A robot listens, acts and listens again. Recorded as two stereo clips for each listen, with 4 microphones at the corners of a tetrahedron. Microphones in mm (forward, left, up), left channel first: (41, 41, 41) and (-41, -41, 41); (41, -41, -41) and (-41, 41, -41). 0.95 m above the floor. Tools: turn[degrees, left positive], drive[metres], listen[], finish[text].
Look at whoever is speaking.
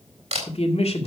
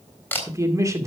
Thought: The man speaking: 70° left.
Action: turn[70]
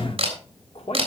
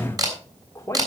Thought: The man speaking is now 20° left.
Action: turn[20]
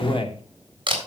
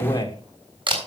Thought: The man speaking is now 10° left.
Action: turn[10]
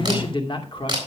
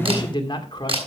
Action: finish[Facing the man speaking, 2 to 4 m away.]